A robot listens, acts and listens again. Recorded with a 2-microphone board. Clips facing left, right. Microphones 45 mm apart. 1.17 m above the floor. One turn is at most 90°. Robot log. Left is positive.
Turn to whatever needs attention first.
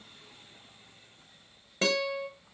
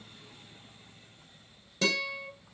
cmd idle
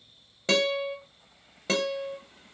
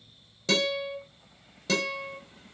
cmd idle
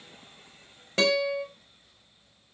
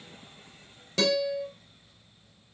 end: I can't make out anything urgent, only a guitar.